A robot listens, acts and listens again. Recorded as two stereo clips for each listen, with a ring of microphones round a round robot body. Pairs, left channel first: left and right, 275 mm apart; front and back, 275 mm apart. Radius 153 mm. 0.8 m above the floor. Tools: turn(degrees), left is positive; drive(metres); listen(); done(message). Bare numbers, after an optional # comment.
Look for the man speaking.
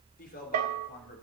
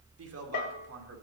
# The man speaking: 150° left.
turn(150)
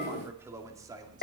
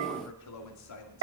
# The man speaking is now 15° right.
turn(-15)
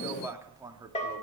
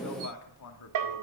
# The man speaking is now 15° right.
turn(-15)
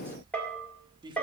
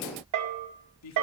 # The man speaking is now 20° right.
turn(-20)
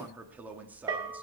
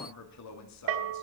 done("Facing the man speaking, 2 to 4 m away.")